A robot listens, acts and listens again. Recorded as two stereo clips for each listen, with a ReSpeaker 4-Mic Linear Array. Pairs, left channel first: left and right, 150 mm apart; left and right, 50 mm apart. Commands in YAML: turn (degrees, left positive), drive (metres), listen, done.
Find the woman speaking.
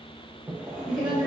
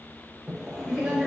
turn: -30
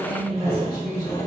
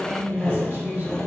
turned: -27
turn: -135
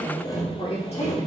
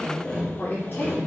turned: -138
turn: 50
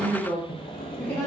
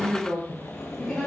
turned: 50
turn: 30
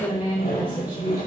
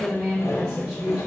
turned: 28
done: "Found it: a woman speaking, straight ahead."